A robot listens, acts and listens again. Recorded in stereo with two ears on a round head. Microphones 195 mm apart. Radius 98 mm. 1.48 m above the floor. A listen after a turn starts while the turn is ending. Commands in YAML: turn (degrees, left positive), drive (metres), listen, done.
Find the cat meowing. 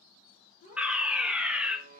turn: 35
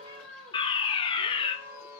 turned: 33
turn: -10
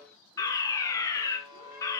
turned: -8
listen: true
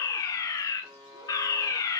listen: true
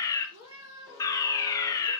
turn: -15
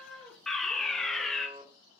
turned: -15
done: "Facing the cat meowing."